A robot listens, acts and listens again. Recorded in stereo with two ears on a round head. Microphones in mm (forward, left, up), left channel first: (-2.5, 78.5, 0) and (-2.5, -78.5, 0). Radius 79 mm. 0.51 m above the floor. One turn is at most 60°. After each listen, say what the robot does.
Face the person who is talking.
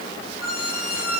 Keep listening.
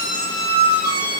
Keep listening.
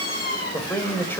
Turn 30° left.
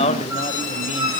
Turn 60° left.
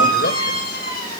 Turn 60° left.
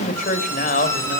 Turn 55° left.
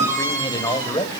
Turn 25° left.
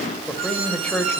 Facing the man speaking, 2 to 4 m away.